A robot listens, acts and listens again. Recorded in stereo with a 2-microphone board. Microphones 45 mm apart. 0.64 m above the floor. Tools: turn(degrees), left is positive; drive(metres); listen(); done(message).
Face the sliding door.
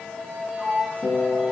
turn(degrees=-15)
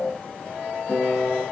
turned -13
listen()
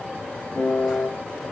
listen()
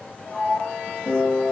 done("Found it: a sliding door, straight ahead, 1 to 2 m away.")